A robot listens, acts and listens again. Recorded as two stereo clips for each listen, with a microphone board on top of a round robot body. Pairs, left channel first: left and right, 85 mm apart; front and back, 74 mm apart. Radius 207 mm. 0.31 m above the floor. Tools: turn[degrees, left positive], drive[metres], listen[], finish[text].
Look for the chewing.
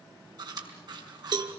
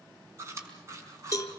Thought: The chewing: 130° right.
Action: turn[-130]
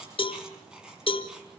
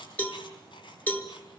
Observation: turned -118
Thought: The chewing is now 10° right.
Action: turn[-10]
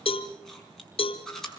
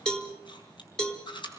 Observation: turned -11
Action: finish[Facing the chewing.]